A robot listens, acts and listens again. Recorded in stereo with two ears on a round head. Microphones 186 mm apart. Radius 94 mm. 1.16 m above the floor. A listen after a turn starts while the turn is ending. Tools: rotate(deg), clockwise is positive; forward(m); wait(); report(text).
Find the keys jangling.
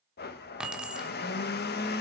rotate(30)
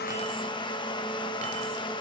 wait()
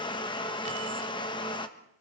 wait()
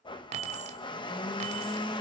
rotate(145)
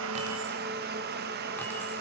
wait()
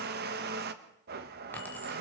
wait()
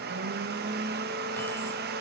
report("I heard keys jangling from this way, but can't make it out now.")